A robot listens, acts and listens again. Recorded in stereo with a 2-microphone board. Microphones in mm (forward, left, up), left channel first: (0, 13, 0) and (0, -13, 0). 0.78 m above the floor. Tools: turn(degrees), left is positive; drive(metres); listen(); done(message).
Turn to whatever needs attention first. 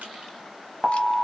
turn(degrees=-20)
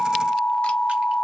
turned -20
done("Found it: an alarm, straight ahead, under 1 m away.")